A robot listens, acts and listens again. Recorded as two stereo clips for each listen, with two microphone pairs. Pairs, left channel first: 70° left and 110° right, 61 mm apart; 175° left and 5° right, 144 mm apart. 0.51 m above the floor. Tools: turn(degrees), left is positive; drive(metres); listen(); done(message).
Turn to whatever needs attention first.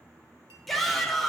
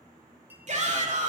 turn(degrees=-20)
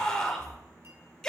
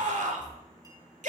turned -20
done("Facing the shout, 1 to 2 m away.")